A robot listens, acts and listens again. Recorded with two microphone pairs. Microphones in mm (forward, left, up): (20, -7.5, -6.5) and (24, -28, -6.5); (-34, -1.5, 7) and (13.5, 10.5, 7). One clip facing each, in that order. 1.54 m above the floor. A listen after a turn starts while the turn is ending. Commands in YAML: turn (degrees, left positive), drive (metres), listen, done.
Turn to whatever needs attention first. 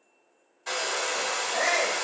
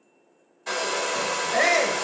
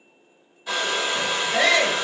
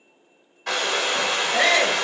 turn: -55
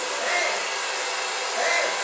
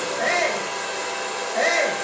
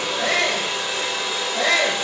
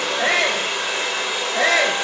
turn: -10
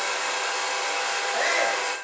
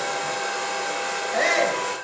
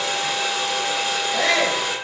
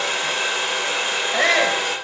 done: "Found it: a shout, straight ahead."